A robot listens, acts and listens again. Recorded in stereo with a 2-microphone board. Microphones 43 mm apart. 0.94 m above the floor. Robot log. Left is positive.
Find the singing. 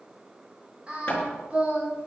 note: The singing: about 30° right or 150° right.
cmd yaw -30
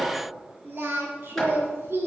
note: So it is at 115° right.
cmd yaw -115
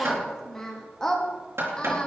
note: The singing is now 15° left.
cmd yaw +15
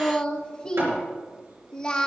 note: The singing is now 20° left.
cmd yaw +20
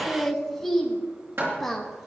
end: Facing the singing, 1 to 2 m away.